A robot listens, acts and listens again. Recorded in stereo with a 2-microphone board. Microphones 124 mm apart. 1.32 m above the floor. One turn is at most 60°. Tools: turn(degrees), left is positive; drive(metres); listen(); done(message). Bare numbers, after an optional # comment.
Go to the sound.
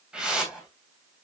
turn(-30)
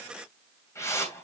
# So it is at 25° left.
turn(25)
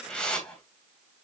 # The whoosh is now 10° left.
turn(10)
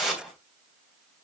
drive(1.0)
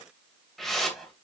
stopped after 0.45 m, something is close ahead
done("Blocked. The whoosh is further on, straight ahead.")